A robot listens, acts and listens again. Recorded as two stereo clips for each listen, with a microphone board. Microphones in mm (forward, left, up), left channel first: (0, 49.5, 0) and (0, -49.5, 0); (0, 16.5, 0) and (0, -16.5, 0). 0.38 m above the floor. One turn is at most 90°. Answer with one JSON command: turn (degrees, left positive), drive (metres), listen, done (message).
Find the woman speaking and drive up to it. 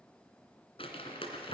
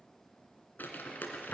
{"listen": true}
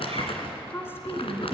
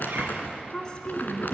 {"turn": 25}
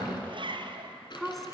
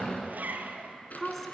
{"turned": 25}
{"drive": 1.0}
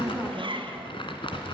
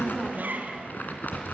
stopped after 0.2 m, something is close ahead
{"turn": 10}
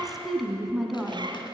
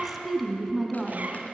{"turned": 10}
{"done": "Something is in my way. I am facing the woman speaking but have not reached it."}